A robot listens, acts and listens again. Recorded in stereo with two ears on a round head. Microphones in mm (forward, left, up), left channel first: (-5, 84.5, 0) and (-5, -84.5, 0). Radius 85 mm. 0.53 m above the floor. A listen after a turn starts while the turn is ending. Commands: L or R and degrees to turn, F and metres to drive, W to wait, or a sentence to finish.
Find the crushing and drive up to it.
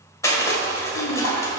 L15
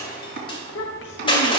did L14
L155
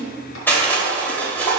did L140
L10
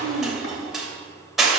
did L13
F1.0
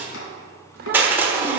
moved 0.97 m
R15
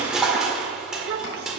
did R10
F1.0
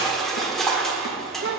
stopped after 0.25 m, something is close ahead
Arrived at the crushing, straight ahead.